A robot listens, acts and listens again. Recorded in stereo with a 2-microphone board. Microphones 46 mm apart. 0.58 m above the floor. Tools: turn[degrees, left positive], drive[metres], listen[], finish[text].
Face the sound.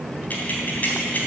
Thought: The keys jangling: about 45° left or 135° left.
Action: turn[45]
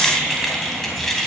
Thought: So it is at 10° left.
Action: turn[10]
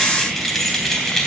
Thought: The keys jangling is now 10° left.
Action: turn[10]
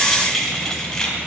Thought: The keys jangling is now 15° left.
Action: turn[15]
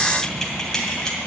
Thought: The keys jangling is now 15° left.
Action: turn[15]
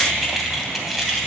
Action: finish[Found it: keys jangling, straight ahead, 2 to 4 m away.]